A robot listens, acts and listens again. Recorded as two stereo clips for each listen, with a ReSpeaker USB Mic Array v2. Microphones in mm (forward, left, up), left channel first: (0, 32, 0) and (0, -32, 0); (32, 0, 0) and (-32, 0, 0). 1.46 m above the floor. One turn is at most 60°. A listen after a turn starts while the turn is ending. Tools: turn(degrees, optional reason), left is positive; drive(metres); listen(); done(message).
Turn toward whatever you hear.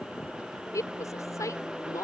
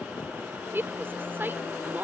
turn(degrees=60, reason="The woman speaking: 120° left.")
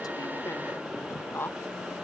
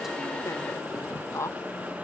turn(degrees=40, reason="The woman speaking is now 40° left.")
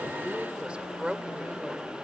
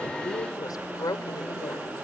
turn(degrees=-15, reason="The woman speaking is now 15° right.")
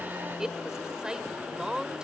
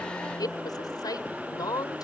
turn(degrees=-10, reason="The woman speaking is now 10° right.")
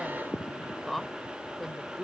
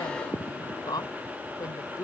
done("Found it: a woman speaking, straight ahead.")